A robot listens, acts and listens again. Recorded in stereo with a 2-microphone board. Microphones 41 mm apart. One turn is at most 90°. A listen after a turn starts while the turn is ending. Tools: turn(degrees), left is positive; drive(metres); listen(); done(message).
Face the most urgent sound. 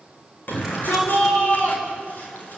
turn(degrees=55)
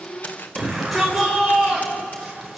done("Found it: a shout, straight ahead, over 4 m away.")